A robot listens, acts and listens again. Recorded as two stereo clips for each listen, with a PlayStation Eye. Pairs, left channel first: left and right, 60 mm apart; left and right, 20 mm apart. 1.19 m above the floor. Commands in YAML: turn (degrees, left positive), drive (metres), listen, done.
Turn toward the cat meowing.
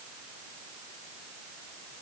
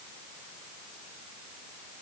listen: true
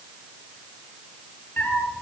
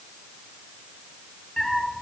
turn: 30
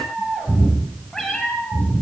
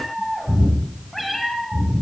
turn: 10
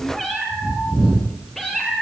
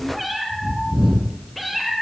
done: "Facing the cat meowing."